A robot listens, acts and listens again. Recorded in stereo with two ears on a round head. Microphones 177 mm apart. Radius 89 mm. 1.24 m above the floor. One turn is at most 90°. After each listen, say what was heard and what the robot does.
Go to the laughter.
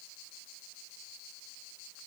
Keep listening.
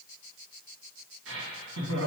The laughter: about 75° right or 105° right. Turn 75° right.
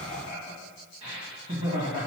So it is at 30° right. Turn 30° right.
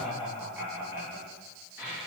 The laughter is now 10° right. Turn 10° right.
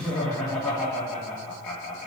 Drive 1.0 m forward.
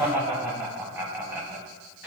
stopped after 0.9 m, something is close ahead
The laughter is now 10° right. Turn 10° right.
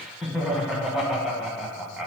Arrived at the laughter, straight ahead.